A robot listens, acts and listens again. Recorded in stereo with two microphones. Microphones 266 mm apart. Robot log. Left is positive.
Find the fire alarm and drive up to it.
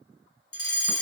note: The fire alarm: about 55° left or 125° left.
cmd yaw +55
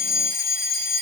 note: So it is at 40° left.
cmd yaw +40
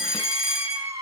cmd fwd 1.0
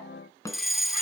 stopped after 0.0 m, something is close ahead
end: Something is in my way. I am facing the fire alarm but have not reached it.